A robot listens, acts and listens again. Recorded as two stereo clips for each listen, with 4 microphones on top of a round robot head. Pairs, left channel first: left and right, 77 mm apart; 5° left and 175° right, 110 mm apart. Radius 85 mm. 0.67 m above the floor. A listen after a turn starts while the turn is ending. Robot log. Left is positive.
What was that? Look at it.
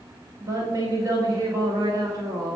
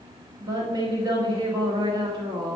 note: The woman speaking: 125° right.
cmd yaw -125
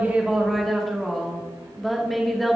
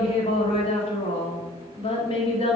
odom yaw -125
end: Facing the woman speaking, 2 to 4 m away.